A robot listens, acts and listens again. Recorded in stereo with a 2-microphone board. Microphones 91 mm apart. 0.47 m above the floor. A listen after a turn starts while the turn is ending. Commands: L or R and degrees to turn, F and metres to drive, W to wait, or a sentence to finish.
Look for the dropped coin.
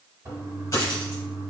L35
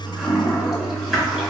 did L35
W
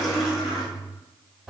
I heard a dropped coin, but can't make it out now. It was about straight ahead or 110° left.